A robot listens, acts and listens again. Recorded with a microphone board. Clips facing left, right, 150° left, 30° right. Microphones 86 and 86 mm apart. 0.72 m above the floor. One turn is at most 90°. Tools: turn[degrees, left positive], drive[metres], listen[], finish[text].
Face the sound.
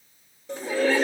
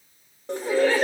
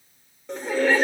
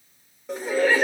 Thought: The laughter: 115° right.
Action: turn[-90]
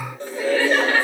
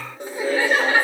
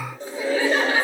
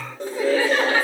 Thought: The laughter is now 20° right.
Action: turn[-20]
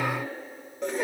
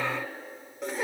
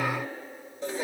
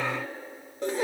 Action: finish[Facing the laughter, 1 to 2 m away.]